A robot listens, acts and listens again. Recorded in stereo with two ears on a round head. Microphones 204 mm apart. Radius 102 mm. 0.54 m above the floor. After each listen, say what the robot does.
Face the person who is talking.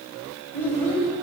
Turn 30° left.
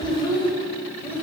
Turn 30° left.
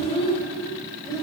Turn 30° left.
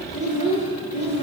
Turn 150° left.
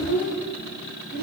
Turn 45° left.
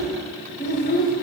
Turn 35° left.
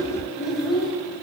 Facing the child speaking.